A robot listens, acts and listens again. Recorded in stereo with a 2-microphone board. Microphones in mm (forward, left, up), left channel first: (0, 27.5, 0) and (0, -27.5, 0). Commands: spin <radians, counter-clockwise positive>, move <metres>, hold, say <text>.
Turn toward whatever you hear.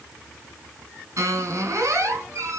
spin -1.13
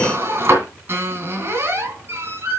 spin -0.87
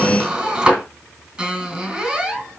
spin -0.35
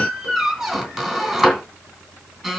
spin -0.17
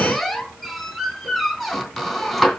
say Found it: a squeak, straight ahead.